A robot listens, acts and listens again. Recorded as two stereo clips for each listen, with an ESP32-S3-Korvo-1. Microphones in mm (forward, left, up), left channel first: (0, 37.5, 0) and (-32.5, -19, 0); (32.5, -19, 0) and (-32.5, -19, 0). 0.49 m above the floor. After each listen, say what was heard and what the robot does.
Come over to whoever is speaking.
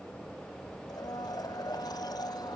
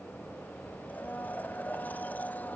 Keep listening.
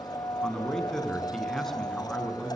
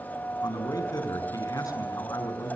The man speaking: 25° right. Turn 25° right.
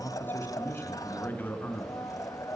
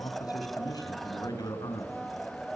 Drive 1.0 m forward.
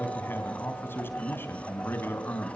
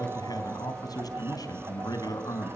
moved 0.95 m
Drive 1.0 m forward.
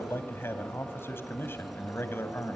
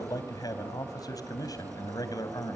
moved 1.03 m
Drive 1.0 m forward.
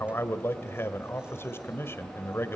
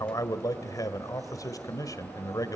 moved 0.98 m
The man speaking is now 10° left. Turn 10° left.
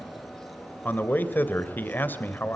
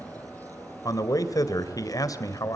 Drive 1.0 m forward.
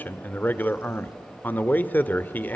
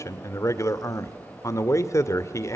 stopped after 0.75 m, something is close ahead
I am next to the man speaking.